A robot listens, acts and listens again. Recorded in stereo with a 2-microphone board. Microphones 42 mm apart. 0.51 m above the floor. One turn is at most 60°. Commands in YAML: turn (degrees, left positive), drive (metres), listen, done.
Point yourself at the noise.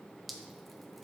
turn: 30
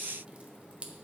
turn: -30
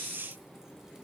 listen: true
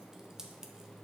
turn: -15
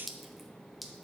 done: "Found it: dripping, straight ahead, under 1 m away."